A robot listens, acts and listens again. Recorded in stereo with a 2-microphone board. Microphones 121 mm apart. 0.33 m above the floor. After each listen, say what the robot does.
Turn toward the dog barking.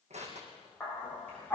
Turn 15° left.
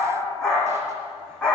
Turn 30° left.
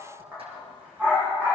Turn 15° right.
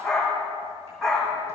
Found it: a dog barking, straight ahead, over 4 m away.